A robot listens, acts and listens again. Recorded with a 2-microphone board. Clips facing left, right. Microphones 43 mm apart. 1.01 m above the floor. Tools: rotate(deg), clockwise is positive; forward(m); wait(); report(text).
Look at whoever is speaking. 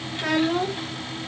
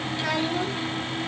rotate(-40)
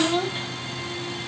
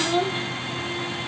report("Facing the child speaking.")